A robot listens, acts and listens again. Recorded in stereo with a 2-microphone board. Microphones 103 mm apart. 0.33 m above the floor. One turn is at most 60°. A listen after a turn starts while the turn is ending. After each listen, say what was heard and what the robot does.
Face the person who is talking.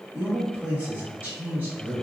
Turn 30° right.
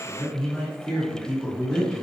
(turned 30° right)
So it is at 15° left. Turn 15° left.
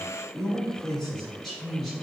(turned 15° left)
Found it: a man speaking, straight ahead.